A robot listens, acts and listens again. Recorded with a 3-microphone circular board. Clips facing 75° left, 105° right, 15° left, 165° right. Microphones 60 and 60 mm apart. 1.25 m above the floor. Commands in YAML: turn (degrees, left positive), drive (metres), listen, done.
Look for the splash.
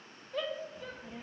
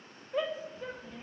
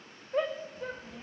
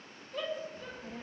listen: true
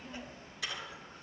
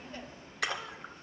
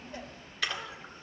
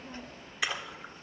turn: -90
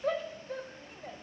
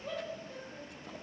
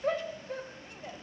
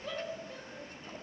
done: "Facing where the splash came from. I can't hear it now."